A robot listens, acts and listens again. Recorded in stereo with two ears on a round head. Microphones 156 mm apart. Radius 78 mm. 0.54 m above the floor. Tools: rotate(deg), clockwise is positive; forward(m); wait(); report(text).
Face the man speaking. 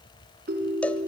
wait()
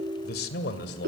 rotate(-65)
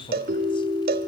wait()
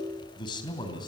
rotate(-25)
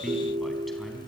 report("Facing the man speaking.")